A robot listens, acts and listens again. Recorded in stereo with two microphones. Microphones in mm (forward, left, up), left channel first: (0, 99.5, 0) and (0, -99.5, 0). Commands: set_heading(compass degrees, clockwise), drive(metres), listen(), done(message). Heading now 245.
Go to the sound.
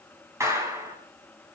set_heading(275)
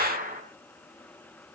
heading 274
set_heading(49)
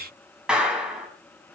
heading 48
drive(1.0)
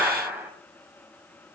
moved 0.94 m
set_heading(58)
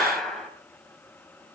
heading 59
drive(1.0)
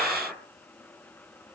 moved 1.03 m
listen()
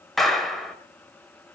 drive(1.0)
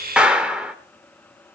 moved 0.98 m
drive(1.0)
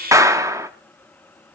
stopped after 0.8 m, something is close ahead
set_heading(74)
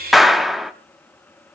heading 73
done("I am next to the clap.")